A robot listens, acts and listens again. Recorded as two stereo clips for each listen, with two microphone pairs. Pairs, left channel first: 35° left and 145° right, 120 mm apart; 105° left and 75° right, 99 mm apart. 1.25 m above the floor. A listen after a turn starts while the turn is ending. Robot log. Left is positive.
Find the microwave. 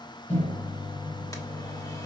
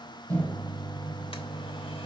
note: The microwave: 30° left.
cmd yaw +30
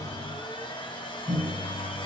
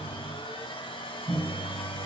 note: The microwave is now 15° left.
cmd yaw +15
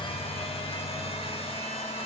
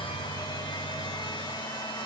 cmd idle
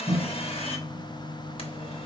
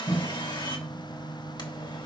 end: Facing the microwave, over 4 m away.